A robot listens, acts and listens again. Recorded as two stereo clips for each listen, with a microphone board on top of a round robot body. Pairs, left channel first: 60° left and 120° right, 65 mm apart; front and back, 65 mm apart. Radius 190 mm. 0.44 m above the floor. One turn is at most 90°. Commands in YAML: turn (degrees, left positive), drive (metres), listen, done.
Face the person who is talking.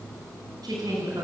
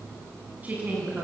turn: -90
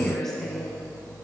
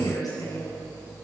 turn: -25
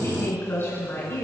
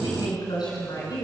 done: "Found it: a woman speaking, straight ahead."